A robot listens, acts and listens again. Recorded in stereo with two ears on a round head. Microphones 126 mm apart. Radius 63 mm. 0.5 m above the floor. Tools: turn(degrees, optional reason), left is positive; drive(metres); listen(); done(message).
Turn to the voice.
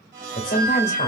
turn(degrees=55, reason="The woman speaking: about 55° left or 125° left.")
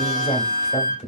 turn(degrees=55, reason="So it is at 55° left.")
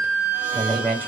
turn(degrees=15, reason="The woman speaking is now 15° left.")
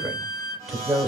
done("Facing the woman speaking, 1 to 2 m away.")